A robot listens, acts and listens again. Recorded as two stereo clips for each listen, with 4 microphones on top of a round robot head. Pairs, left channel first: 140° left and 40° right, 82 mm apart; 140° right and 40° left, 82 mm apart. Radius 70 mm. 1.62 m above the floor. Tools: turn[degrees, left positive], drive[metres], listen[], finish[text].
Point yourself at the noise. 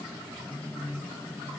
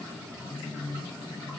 Action: listen[]
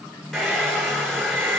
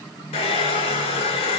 Thought: The hair dryer: 135° right.
Action: turn[-135]
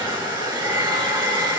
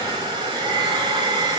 Action: finish[Found it: a hair dryer, straight ahead, over 4 m away.]